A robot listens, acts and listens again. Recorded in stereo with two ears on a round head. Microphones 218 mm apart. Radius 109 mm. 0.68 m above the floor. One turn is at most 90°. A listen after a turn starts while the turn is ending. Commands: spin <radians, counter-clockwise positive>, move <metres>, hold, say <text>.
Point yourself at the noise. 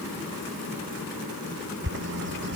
spin -0.79
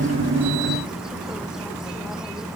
say Found it: a bird, straight ahead.